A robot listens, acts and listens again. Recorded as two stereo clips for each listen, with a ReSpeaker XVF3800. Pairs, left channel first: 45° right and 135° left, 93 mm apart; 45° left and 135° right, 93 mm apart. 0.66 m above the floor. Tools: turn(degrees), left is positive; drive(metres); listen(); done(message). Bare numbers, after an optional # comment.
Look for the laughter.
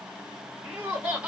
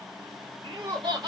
# The laughter: 155° right.
turn(-155)
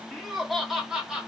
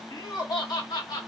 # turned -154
# The laughter is now 60° left.
turn(60)
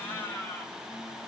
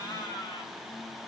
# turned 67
# The laughter is now 15° left.
turn(15)
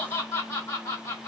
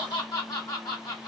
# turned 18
done("Found it: laughter, straight ahead, 1 to 2 m away.")